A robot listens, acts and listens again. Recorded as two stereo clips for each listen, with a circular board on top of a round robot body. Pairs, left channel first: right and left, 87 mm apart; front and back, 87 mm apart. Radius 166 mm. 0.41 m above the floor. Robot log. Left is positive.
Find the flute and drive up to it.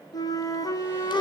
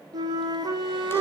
note: The flute: 135° right.
cmd yaw -135
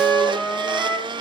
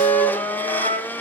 cmd fwd 1.0
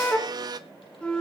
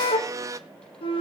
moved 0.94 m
note: The flute is now 10° right.
cmd yaw -10
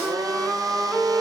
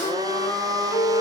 cmd fwd 1.0
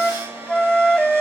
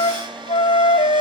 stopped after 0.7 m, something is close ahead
end: I am next to the flute.